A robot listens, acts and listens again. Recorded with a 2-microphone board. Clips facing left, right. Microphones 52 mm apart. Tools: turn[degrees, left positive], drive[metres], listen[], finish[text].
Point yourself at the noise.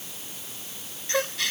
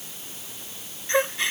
Thought: The gasp: about 25° right or 155° right.
Action: turn[-25]
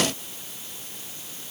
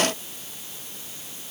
Action: listen[]
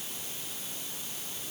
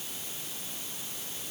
Action: finish[I heard a gasp, but can't make it out now. It was about straight ahead or 130° right.]